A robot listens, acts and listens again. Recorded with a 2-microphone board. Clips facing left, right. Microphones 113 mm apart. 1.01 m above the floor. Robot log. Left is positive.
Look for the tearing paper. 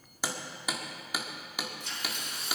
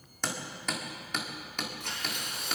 note: The tearing paper: about 60° right or 120° right.
cmd yaw -60
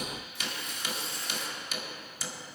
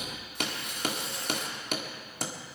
note: So it is at 60° right.
cmd yaw -60
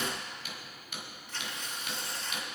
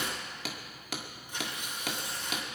note: The tearing paper is now 15° right.
cmd yaw -15
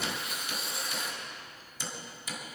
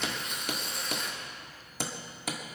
end: Found it: tearing paper, straight ahead.